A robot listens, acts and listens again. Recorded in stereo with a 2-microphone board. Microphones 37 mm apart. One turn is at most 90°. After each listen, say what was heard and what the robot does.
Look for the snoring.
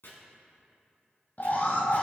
Keep listening.
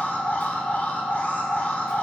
Keep listening.
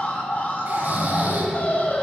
The snoring: about 55° right or 125° right. Turn 55° right.
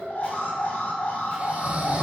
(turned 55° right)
So it is at 50° right. Turn 50° right.
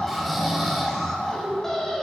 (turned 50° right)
Found it: snoring, straight ahead, 1 to 2 m away.